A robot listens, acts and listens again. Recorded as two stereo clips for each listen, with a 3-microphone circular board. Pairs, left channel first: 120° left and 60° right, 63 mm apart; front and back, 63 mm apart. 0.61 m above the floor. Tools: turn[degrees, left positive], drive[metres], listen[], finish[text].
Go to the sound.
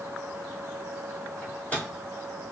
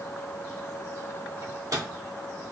Thought: The microwave: 175° right.
Action: turn[-175]
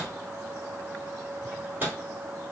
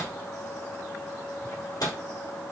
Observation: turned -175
Action: drive[1.0]
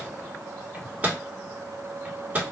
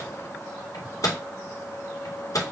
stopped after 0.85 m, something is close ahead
Action: finish[Arrived at the microwave, straight ahead.]